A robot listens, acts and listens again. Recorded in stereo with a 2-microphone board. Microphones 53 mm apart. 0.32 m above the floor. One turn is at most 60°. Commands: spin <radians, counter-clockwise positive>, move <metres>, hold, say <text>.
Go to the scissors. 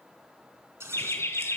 spin -0.96
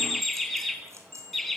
hold
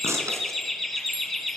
spin -1.05
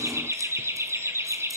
hold
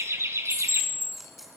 hold
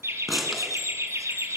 move 1.0
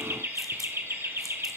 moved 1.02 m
hold
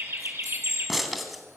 move 1.0
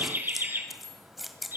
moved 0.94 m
move 1.0
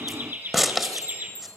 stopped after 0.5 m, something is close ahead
say I am next to the scissors.